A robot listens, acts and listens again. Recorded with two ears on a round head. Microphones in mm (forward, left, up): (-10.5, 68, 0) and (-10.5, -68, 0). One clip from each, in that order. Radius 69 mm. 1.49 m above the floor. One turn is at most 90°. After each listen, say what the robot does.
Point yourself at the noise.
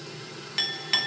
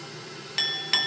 Turn 30° right.
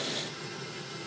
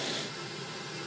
Keep listening.
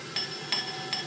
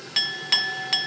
Turn 90° right.
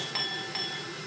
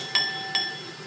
Turn 55° right.
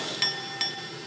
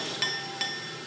Turn 10° left.
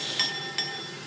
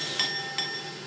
Found it: a clink, straight ahead.